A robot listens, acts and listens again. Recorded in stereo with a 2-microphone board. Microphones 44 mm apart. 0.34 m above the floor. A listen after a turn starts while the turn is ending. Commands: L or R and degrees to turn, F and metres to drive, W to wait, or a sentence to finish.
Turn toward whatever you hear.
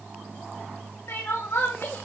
L70
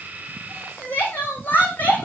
L40
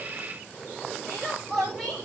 Facing the crying, 2 to 4 m away.